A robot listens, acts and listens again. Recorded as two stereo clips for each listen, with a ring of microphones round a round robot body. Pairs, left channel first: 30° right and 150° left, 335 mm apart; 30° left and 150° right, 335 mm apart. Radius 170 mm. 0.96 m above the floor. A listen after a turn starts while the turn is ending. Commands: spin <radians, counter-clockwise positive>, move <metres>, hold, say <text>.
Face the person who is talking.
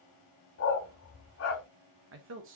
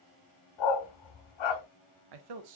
spin -2.71
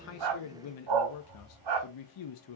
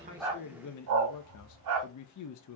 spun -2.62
say Facing the man speaking, under 1 m away.